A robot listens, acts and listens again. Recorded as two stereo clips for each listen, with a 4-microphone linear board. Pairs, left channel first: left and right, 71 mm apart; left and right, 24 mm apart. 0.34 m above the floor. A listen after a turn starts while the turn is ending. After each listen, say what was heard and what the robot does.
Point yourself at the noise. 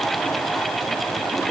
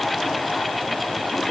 Keep listening.
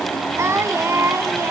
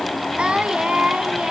The singing: about 45° right or 135° right. Turn 45° right.
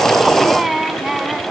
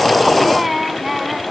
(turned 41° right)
Facing the singing, 1 to 2 m away.